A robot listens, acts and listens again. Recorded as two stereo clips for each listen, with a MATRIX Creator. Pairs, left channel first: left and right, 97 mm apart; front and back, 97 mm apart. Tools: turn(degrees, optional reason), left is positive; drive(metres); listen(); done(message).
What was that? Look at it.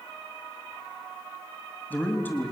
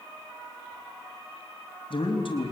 turn(degrees=20, reason="The man speaking: 20° left.")
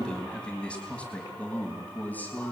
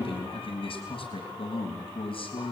turn(degrees=20, reason="The man speaking is now 20° left.")
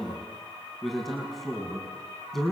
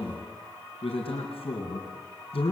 done("Found it: a man speaking, straight ahead, over 4 m away.")